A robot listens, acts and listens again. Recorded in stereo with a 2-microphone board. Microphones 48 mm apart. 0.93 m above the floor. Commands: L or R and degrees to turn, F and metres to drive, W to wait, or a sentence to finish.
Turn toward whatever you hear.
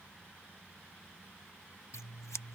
L90
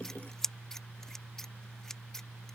L10
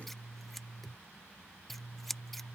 Facing the scissors.